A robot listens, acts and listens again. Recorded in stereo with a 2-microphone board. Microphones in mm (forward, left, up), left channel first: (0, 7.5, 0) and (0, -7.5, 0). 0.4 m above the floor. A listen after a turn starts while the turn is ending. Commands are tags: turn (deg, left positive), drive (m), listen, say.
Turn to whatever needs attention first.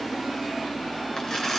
<listen/>
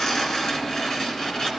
<listen/>
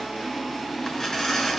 <say>I can't make out anything urgent to turn to.</say>